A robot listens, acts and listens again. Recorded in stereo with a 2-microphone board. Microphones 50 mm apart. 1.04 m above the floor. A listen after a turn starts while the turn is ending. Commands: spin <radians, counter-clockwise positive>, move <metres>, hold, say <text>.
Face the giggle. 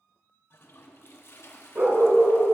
hold
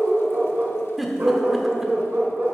spin -0.52
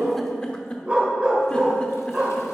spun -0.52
spin 0.44
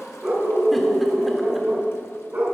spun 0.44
hold
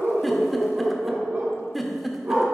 say Found it: a giggle, straight ahead.